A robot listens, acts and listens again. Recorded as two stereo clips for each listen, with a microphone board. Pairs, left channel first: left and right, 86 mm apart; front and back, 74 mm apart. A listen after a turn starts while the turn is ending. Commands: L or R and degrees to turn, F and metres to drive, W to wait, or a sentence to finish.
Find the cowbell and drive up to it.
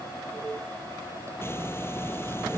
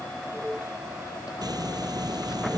W
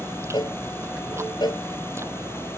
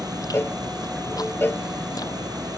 L55
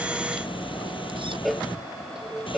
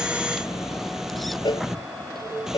F1.0
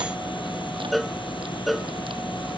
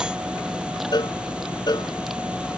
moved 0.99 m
F1.0
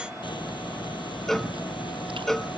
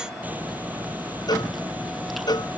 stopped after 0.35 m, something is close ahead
I am next to the cowbell.